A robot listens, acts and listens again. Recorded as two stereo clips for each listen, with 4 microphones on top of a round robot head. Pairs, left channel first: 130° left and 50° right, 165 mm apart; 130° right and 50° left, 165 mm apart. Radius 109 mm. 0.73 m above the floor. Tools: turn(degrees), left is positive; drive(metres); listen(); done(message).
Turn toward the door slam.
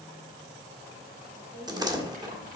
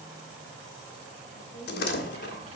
turn(degrees=-120)
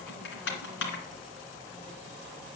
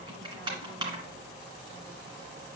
done("Facing where the door slam came from. I can't hear it now.")